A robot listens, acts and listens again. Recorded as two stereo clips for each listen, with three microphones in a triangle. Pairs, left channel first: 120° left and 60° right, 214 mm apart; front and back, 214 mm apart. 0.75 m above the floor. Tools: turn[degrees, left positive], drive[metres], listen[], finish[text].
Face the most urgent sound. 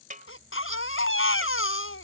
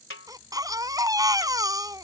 Thought: The baby crying: 105° left.
Action: turn[105]
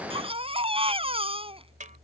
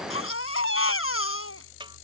Action: finish[Found it: a baby crying, straight ahead.]